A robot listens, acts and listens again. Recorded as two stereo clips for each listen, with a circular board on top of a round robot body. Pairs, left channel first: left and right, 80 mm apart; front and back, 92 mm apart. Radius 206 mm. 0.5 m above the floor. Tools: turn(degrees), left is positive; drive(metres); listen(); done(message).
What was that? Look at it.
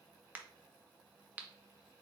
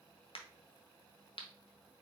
turn(degrees=-20)
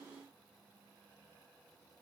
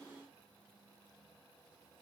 done("Facing where the crack came from. I can't hear it now.")